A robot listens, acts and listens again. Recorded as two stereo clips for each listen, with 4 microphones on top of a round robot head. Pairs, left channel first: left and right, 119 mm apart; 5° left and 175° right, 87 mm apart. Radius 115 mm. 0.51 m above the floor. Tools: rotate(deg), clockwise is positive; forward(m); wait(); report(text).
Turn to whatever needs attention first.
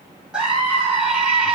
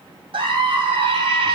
rotate(175)
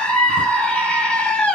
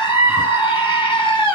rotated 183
rotate(-10)
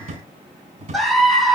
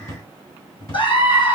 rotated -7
report("Found it: a scream, straight ahead, 2 to 4 m away.")